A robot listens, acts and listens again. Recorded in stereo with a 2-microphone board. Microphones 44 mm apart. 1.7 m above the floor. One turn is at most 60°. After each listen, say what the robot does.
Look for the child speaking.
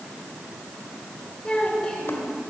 Turn 15° left.
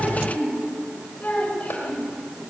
Turn 35° left.
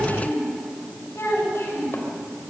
Turn 60° left.
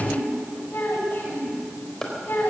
Turn 60° left.
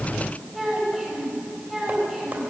Facing the child speaking, over 4 m away.